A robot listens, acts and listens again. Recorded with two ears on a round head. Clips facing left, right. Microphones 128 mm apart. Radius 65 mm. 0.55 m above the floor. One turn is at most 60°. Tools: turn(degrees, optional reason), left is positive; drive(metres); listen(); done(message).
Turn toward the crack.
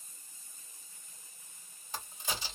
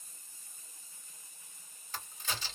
turn(degrees=30)
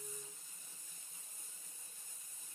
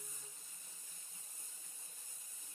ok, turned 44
listen()
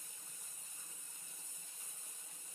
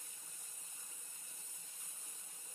done("I heard a crack, but can't make it out now. It was about 30° right or 120° left.")